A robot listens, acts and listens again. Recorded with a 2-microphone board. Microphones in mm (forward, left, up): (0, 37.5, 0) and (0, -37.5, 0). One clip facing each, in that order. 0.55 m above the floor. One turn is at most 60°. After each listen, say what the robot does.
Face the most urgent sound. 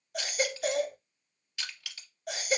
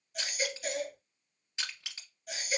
Turn 60° left.
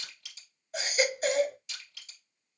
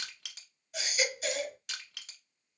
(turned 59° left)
Turn 45° left.
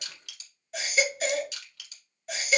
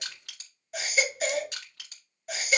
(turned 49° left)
Facing the baby crying, under 1 m away.